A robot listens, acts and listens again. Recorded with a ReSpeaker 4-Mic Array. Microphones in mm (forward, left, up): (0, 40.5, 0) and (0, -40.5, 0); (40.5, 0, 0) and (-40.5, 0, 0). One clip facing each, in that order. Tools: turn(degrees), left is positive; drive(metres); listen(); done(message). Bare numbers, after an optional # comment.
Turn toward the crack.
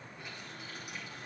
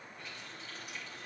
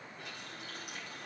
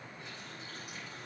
listen()
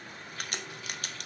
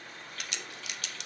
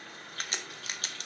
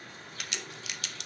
# The crack: 50° left.
turn(50)
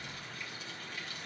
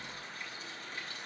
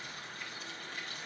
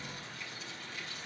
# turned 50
done("Facing where the crack came from. I can't hear it now.")